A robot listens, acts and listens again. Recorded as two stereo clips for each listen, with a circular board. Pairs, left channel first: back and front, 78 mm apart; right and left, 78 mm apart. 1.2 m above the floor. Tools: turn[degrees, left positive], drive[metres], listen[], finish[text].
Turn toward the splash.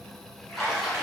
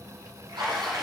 Thought: The splash: 95° left.
Action: turn[95]
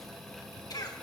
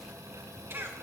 Action: finish[Facing where the splash came from. I can't hear it now.]